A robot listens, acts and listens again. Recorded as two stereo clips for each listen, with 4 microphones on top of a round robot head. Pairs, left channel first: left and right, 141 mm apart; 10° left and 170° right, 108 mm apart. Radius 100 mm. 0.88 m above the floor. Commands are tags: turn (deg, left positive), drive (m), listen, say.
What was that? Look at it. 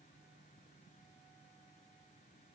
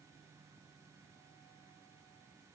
<listen/>
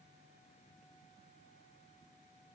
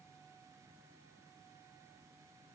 <listen/>
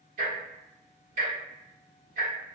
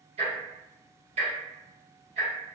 <turn deg="-130"/>
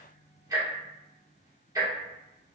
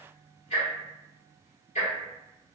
<turn deg="-20"/>
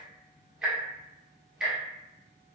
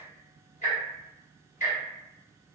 <say>Found it: ticking, straight ahead, 1 to 2 m away.</say>